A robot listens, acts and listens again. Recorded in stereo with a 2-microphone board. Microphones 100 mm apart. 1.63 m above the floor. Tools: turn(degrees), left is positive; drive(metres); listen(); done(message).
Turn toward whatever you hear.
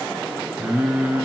turn(degrees=-30)
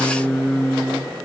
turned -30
turn(degrees=20)
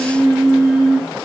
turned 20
done("Facing the singing.")